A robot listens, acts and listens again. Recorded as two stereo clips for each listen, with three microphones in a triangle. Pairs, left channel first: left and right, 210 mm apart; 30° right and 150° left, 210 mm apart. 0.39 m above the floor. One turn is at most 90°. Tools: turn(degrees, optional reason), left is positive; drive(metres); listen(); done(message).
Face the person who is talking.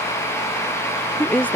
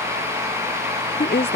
done("Found it: a woman speaking, straight ahead.")